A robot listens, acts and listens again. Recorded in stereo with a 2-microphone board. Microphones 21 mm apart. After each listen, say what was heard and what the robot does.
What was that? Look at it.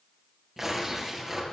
The tearing paper: about 20° right or 160° right. Turn 20° right.
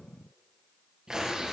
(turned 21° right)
So it is at 140° right. Turn 140° right.
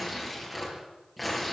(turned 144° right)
Facing the tearing paper.